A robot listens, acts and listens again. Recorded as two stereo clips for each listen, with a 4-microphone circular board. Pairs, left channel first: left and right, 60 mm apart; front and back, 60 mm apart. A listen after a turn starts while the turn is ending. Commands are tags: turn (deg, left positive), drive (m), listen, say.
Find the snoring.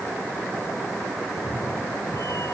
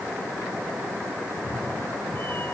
<listen/>
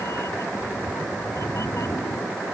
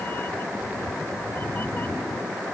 <listen/>
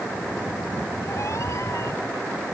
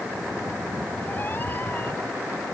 <say>I can't make out snoring, only a cat meowing.</say>